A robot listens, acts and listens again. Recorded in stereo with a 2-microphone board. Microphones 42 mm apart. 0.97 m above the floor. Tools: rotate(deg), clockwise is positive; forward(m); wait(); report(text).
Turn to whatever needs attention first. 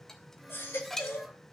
rotate(-70)
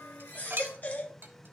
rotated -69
rotate(-40)
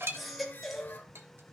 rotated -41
report("Found it: a baby crying, straight ahead, 1 to 2 m away.")